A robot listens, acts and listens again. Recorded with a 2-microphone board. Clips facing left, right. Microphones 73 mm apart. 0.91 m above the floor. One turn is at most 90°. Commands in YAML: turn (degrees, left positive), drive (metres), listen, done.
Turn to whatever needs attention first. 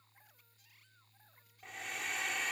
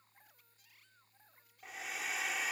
listen: true
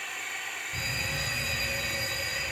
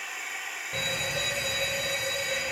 turn: -90
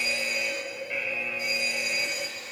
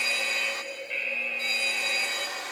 turn: 10
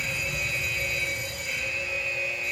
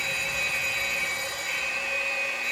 done: "Facing the fire alarm, over 4 m away."